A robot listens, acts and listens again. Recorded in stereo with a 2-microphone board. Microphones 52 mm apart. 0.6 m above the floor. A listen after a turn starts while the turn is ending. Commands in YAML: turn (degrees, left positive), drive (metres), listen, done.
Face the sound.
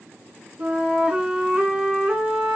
turn: -20
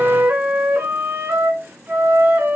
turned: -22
turn: -135
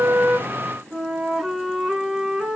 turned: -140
done: "Found it: a flute, straight ahead, 2 to 4 m away."